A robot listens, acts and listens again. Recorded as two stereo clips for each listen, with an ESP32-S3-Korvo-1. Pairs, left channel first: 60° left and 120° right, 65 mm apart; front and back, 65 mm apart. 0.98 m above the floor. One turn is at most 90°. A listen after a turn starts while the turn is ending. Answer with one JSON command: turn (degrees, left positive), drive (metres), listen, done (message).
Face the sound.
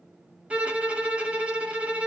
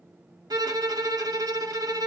{"turn": 90}
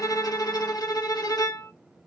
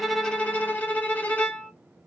{"turn": 60}
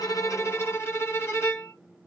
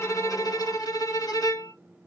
{"turn": 10}
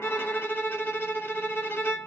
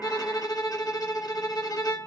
{"done": "Found it: a violin, straight ahead, under 1 m away."}